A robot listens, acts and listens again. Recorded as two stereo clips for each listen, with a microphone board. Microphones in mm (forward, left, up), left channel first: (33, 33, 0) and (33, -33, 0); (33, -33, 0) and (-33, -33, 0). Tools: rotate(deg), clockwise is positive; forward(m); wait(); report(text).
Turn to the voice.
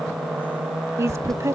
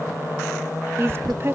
rotate(130)
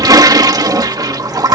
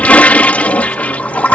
wait()
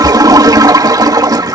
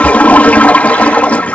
wait()
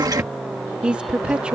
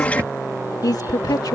rotate(15)
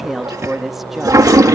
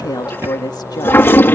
report("Facing the woman speaking.")